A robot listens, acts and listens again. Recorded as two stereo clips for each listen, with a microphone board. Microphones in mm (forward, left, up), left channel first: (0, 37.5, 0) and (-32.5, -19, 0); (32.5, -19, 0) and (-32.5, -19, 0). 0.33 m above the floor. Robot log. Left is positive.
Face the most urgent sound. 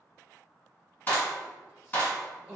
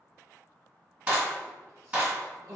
note: The crying: 170° left.
cmd yaw +170
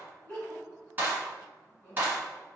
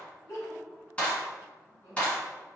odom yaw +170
note: The crying is now 15° right.
cmd yaw -15
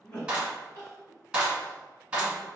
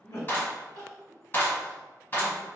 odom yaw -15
end: Found it: crying, straight ahead, 1 to 2 m away.